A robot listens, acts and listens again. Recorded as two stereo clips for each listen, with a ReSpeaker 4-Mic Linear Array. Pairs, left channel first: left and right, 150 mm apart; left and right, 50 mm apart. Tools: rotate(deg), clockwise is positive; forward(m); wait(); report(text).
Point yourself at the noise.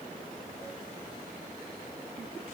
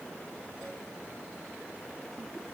wait()
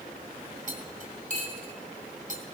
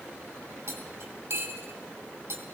rotate(60)
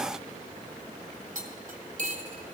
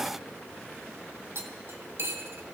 rotate(60)
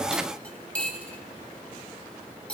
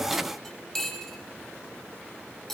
rotate(-10)
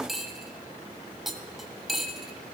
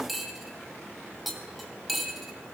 report("Found it: cutlery clinking, straight ahead.")